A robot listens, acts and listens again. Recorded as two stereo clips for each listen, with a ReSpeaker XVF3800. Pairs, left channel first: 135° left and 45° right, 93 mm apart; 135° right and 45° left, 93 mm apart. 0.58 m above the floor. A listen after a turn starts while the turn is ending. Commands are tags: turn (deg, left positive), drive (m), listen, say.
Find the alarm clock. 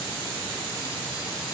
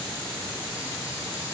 <listen/>
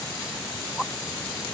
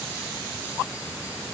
<listen/>
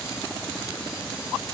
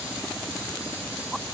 <say>I can't make out an alarm clock to turn to.</say>